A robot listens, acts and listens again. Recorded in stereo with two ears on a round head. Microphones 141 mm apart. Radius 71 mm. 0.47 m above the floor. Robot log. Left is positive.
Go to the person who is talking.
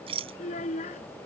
note: The child speaking: about 50° left or 130° left.
cmd yaw +50
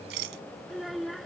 cmd fwd 1.0
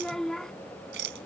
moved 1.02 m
cmd fwd 1.0
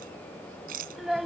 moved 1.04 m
cmd fwd 1.0
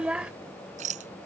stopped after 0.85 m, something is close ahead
note: The child speaking is now 10° right.
cmd yaw -10
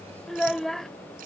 end: I am next to the child speaking.